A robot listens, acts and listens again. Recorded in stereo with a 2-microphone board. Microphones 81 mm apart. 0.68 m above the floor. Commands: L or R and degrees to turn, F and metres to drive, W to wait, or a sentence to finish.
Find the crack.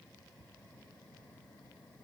W
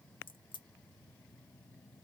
L90
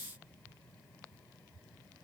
I heard a crack from this way, but can't make it out now.